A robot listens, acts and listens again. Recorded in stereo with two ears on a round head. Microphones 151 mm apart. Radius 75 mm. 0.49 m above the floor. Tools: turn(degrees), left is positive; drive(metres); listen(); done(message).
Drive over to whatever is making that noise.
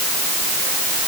listen()
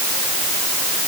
listen()
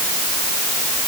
done("I can't make out anything to turn to.")